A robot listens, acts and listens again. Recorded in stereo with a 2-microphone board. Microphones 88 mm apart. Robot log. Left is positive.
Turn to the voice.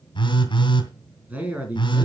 note: The man speaking: about 15° right or 165° right.
cmd yaw -15
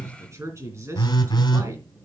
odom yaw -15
note: So it is at 145° right.
cmd yaw -145
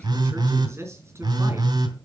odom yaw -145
note: The man speaking is now 30° right.
cmd yaw -30
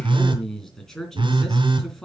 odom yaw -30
end: Found it: a man speaking, straight ahead, over 4 m away.